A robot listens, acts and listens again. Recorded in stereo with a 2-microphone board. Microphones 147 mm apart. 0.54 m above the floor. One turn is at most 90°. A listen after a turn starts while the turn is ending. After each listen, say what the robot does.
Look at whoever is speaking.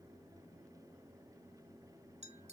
Keep listening.
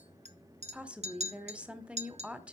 Turn 30° right.
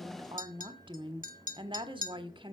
Turn 90° right.
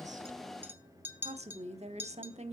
Turn 60° right.
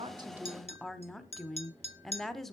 Found it: a woman speaking, straight ahead.